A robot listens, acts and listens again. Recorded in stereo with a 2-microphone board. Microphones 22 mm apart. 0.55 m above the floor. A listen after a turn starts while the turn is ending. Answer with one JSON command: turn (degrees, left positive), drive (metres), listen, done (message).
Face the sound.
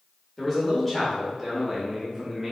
{"turn": -20}
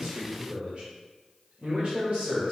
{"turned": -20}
{"turn": -115}
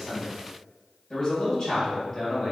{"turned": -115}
{"turn": 15}
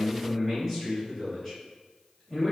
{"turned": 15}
{"done": "Found it: a man speaking, straight ahead, 2 to 4 m away."}